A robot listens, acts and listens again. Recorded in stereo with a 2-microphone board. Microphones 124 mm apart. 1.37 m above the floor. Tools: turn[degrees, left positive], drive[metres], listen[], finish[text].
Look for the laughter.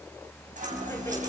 Thought: The laughter: about 20° left or 160° left.
Action: turn[20]
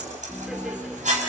Action: finish[Found it: laughter, straight ahead, 2 to 4 m away.]